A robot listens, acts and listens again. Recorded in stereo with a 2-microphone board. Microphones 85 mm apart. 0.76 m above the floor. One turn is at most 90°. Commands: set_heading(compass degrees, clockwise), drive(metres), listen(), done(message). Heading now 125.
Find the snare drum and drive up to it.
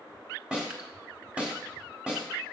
set_heading(155)
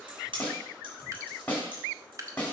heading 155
set_heading(135)
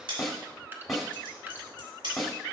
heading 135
drive(1.0)
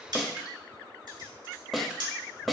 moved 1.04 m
drive(1.0)
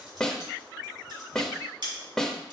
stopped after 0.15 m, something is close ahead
done("I am next to the snare drum.")